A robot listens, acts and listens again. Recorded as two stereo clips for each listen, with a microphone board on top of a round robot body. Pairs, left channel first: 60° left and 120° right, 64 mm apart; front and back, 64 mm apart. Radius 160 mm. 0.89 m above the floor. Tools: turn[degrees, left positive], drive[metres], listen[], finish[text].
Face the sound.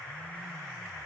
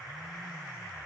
Action: listen[]
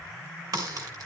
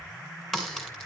Thought: The crack: 85° right.
Action: turn[-85]
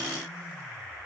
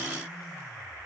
Action: finish[Facing where the crack came from. I can't hear it now.]